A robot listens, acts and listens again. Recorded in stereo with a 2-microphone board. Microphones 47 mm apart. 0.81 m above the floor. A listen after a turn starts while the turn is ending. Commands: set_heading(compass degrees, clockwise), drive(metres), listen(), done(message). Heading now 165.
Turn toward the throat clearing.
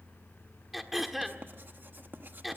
set_heading(135)
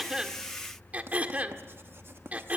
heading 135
set_heading(170)
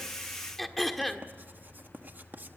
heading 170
done("Facing the throat clearing, 1 to 2 m away.")